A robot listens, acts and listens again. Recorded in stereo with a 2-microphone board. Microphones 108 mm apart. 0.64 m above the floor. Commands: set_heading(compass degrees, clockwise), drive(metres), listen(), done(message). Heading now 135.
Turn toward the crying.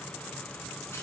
listen()
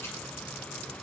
listen()
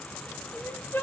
set_heading(115)
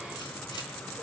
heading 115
listen()
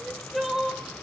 done("Found it: crying, straight ahead, under 1 m away.")